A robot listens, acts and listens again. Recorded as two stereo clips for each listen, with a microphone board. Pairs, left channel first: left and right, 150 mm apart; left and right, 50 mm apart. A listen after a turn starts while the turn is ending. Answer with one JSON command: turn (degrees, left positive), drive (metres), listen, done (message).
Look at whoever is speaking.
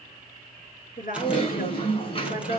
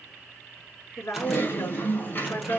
{"turn": 65}
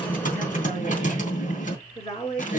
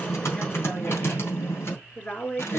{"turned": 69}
{"turn": 40}
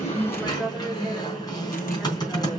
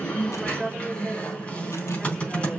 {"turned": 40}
{"done": "Found it: a woman speaking, straight ahead."}